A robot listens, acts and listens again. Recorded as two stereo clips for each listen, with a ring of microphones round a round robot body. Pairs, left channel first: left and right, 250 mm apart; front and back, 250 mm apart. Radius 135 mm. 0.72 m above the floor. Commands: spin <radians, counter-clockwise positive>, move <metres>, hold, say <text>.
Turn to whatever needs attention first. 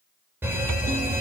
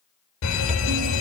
say Facing the fire alarm.